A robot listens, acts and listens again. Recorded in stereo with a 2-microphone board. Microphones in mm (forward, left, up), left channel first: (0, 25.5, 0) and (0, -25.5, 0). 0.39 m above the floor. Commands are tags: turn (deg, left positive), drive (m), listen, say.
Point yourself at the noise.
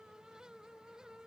<listen/>
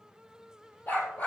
<turn deg="40"/>
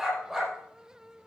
<say>Facing the dog barking, over 4 m away.</say>